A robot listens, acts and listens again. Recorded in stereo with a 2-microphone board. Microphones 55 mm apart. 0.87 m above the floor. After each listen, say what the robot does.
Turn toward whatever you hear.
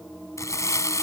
Turn 65° left.
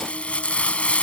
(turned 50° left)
Turn 20° left.
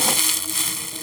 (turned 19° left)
Found it: crumpling, straight ahead.